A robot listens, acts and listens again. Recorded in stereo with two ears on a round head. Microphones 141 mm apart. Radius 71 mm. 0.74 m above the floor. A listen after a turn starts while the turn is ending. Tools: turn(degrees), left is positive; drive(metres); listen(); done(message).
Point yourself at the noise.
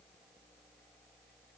listen()
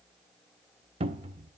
turn(degrees=-35)
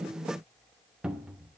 done("Facing the cupboard door.")